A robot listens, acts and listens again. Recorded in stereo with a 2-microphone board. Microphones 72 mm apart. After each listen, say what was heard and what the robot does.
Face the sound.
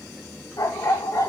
The dog barking: about 55° left or 125° left. Turn 55° left.
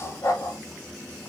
So it is at 55° left. Turn 55° left.
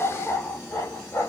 The dog barking is now 40° left. Turn 40° left.
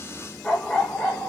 The dog barking is now 15° left. Turn 15° left.
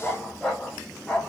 The dog barking is now 15° left. Turn 15° left.
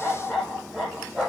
Found it: a dog barking, straight ahead.